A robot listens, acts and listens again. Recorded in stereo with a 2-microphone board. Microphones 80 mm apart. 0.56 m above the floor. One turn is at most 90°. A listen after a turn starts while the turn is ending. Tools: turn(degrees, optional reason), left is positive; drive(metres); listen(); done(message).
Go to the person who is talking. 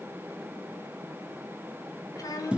turn(degrees=50, reason="The child speaking: about 50° left or 130° left.")
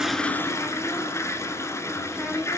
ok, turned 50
drive(metres=1.0)
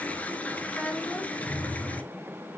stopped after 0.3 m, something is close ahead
turn(degrees=15, reason="The child speaking is now 15° left.")
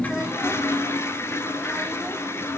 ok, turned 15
listen()
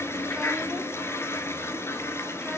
listen()
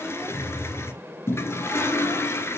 done("Facing where the child speaking came from. I can't hear it now. I did not reach it.")